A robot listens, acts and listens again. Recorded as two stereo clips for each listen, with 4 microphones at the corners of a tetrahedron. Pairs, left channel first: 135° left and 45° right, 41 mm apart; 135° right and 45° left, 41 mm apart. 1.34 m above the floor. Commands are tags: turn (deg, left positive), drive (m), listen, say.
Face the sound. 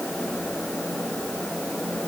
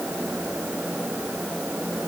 <listen/>
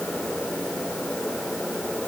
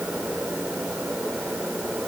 <listen/>
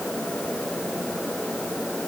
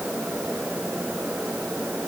<say>I can't make out anything to turn to.</say>